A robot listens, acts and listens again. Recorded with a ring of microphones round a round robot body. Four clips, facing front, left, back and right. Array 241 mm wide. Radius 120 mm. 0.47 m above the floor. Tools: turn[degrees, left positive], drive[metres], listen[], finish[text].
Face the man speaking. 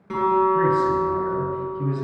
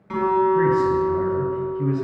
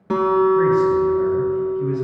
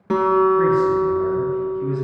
Thought: The man speaking: 45° left.
Action: turn[45]
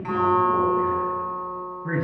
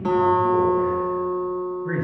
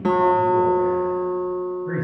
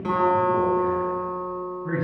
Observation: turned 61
Thought: The man speaking is now 15° right.
Action: turn[-15]
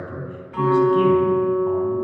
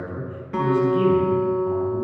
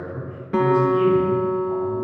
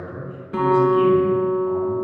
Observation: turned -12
Action: finish[Found it: a man speaking, straight ahead, over 4 m away.]